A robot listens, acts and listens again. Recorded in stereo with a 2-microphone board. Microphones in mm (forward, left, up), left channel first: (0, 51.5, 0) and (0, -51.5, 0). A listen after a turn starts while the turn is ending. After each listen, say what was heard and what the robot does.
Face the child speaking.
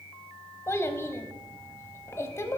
The child speaking: about 25° left or 155° left. Turn 25° left.
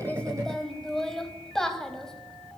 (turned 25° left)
Found it: a child speaking, straight ahead.